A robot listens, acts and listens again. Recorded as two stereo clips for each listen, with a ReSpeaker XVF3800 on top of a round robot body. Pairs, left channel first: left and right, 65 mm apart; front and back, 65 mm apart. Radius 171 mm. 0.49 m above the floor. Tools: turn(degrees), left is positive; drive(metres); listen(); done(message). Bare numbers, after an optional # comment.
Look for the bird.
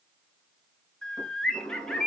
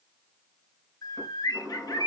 # The bird: 10° left.
turn(10)
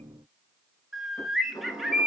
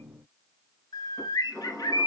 done("Found it: a bird, straight ahead, 1 to 2 m away.")